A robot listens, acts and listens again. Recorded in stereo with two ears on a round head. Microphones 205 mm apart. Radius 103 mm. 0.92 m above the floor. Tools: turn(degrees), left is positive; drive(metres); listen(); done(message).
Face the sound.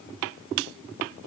listen()
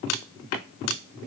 listen()
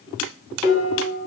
turn(degrees=-30)
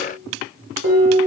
turn(degrees=-120)
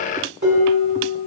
turn(degrees=-45)
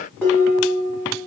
done("Found it: dishes clattering, straight ahead.")